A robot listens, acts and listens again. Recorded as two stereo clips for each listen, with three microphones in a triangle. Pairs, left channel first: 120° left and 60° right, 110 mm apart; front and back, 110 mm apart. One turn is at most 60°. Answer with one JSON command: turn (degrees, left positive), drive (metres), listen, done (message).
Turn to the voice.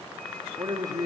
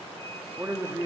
{"turn": -60}
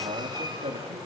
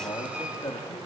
{"turn": -60}
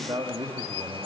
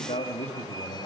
{"done": "Found it: a man speaking, straight ahead."}